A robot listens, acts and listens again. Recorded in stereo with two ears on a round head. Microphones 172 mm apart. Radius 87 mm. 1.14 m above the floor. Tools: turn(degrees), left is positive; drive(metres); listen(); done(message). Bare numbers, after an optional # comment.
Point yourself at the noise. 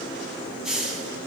turn(-30)
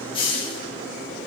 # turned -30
# So it is at 25° left.
turn(25)
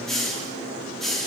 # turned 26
done("Facing the hiss, 1 to 2 m away.")